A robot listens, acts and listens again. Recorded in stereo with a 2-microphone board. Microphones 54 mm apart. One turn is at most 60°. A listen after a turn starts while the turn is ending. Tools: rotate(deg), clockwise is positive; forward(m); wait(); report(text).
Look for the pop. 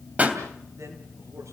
rotate(30)
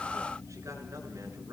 wait()
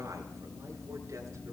report("I heard a pop, but can't make it out now. It was about straight ahead or 120° right.")